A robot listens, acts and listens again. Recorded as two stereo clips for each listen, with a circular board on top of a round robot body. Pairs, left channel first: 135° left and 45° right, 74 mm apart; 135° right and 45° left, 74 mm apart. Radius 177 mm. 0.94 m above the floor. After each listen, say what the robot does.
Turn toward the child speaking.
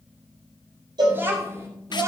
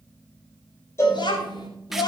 Turn 100° right.
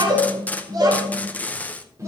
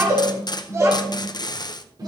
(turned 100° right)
Turn 10° left.
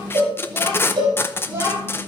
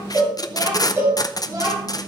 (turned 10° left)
Turn 15° left.
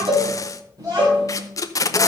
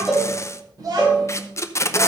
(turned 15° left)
Facing the child speaking, 2 to 4 m away.